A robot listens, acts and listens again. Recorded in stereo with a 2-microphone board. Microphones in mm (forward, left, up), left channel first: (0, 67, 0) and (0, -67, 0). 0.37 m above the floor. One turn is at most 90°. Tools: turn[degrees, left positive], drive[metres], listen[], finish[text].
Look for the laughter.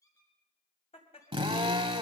Thought: The laughter: about 50° left or 130° left.
Action: turn[50]
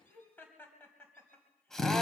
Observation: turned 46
Thought: So it is at 15° left.
Action: turn[15]
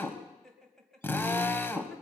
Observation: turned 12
Action: finish[Facing the laughter, 2 to 4 m away.]